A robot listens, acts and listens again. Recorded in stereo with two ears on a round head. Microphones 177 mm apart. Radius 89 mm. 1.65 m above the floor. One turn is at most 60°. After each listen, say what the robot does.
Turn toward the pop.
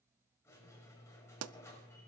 Turn 60° right.
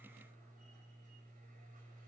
Turn 30° right.
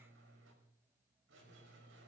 Facing where the pop came from. I can't hear it now.